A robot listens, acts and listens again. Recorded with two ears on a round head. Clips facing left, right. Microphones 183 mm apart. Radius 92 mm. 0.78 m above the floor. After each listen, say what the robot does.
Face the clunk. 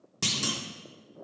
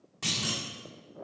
Turn 60° left.
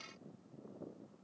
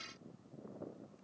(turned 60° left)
Keep listening.
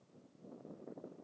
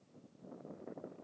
I heard a clunk, but can't make it out now. It was about straight ahead or 60° left.